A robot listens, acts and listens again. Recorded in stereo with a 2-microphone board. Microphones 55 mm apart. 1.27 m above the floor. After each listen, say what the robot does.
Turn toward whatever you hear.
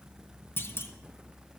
Turn 45° left.
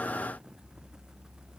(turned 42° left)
Keep listening.
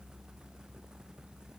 I heard a clunk, but can't make it out now. It was about 5° left or 95° left.